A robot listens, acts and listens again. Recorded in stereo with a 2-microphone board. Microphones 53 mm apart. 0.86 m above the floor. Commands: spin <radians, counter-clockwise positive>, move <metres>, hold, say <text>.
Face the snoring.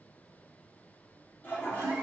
hold
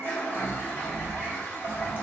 spin 1.22
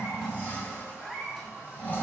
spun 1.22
spin 0.52
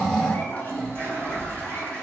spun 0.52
say Facing the snoring, 1 to 2 m away.